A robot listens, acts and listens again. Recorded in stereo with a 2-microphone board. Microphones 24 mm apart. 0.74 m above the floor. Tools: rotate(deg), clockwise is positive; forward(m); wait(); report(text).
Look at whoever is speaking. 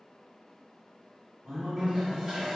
rotate(70)
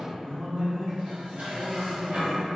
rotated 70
report("Facing the man speaking, 1 to 2 m away.")